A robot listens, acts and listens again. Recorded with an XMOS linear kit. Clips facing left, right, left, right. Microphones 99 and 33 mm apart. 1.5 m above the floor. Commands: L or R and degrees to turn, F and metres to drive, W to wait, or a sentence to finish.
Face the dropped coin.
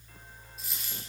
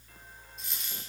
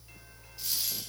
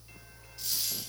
L30
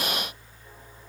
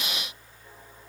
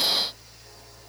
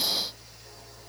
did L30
W
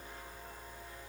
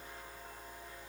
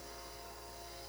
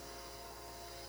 I heard a dropped coin, but can't make it out now. It was about 25° right or 145° left.